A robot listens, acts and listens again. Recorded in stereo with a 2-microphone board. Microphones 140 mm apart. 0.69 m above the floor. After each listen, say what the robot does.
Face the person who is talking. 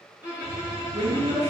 Turn 45° right.
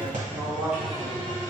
Facing the woman speaking.